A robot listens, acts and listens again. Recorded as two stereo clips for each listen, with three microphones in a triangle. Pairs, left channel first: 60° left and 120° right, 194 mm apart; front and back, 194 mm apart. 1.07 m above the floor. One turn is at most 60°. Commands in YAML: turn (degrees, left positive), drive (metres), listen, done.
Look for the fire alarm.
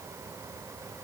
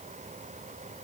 listen: true
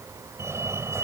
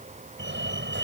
turn: 60
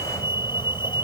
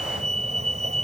turn: 60
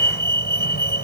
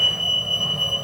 turn: 60
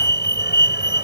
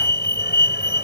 turn: 30
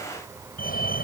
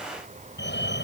turn: 20
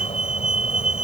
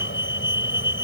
done: "Found it: a fire alarm, straight ahead."